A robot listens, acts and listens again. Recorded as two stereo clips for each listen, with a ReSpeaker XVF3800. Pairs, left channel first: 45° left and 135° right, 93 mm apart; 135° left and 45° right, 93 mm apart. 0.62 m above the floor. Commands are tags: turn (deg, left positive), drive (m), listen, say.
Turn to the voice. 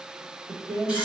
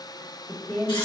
<turn deg="-160"/>
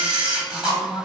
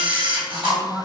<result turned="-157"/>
<say>Found it: a woman speaking, straight ahead.</say>